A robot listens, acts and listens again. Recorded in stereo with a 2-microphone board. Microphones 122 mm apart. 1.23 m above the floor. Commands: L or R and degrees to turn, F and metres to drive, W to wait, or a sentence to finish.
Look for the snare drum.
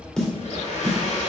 L30
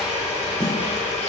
W
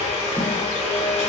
W
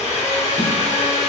I heard a snare drum, but can't make it out now. It was about 25° right or 145° left.